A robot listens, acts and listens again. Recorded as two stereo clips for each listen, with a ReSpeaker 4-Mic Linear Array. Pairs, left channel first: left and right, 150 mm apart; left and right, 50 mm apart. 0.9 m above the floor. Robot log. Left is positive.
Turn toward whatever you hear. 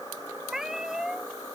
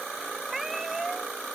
cmd yaw -30
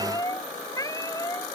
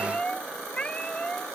note: So it is at 20° left.
cmd yaw +20
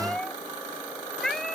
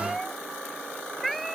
end: Facing the cat meowing.